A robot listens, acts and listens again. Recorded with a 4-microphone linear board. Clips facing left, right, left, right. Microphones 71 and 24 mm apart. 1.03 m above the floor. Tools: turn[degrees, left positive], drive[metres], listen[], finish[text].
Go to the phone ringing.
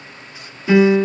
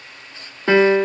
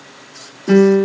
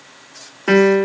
Action: listen[]
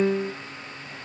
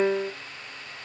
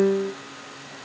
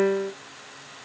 Action: listen[]
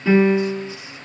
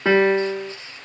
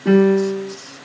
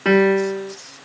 Action: finish[I can't make out a phone ringing to turn to.]